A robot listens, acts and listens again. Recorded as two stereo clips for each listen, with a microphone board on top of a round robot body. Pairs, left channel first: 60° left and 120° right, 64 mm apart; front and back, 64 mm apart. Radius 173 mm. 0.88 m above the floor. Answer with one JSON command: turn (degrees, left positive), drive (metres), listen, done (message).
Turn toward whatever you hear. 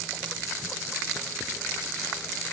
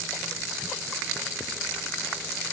{"listen": true}
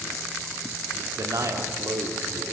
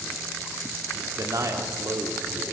{"turn": -145}
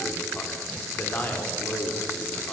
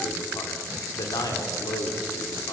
{"done": "Facing the man speaking, 2 to 4 m away."}